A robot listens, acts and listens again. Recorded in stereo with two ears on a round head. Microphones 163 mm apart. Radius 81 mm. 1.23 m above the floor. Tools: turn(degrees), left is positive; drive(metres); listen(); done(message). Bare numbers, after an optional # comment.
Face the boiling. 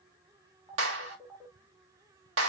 listen()
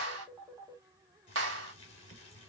# The boiling: about 35° left or 145° left.
turn(35)
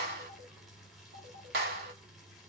done("Facing the boiling.")